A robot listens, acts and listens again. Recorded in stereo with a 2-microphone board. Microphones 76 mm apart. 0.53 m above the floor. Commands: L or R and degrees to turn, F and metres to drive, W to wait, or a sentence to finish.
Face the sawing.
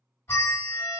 W
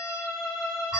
W
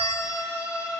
I can't make out sawing, only a bell and a violin.